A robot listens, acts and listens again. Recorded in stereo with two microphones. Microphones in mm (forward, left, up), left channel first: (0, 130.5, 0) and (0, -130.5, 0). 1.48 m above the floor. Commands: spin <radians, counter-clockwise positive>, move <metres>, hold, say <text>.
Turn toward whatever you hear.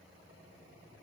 hold
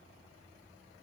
hold
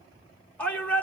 spin 0.52
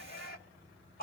spin 2.53
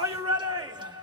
spin -0.26
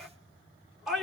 say Facing the shout.